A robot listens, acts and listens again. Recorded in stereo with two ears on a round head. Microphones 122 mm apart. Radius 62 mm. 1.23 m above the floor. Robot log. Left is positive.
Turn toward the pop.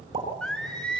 note: The pop: about 40° right or 140° right.
cmd yaw -40
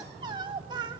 cmd idle
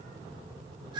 end: I heard a pop, but can't make it out now. It was about straight ahead or 100° right.